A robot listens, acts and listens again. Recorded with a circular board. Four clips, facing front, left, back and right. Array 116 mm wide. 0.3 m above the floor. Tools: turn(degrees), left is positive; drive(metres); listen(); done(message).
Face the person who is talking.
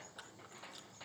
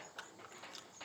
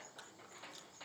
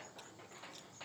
listen()
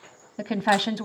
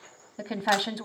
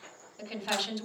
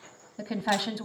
turn(degrees=10)
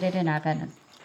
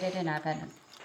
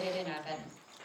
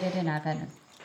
done("Found it: a woman speaking, straight ahead.")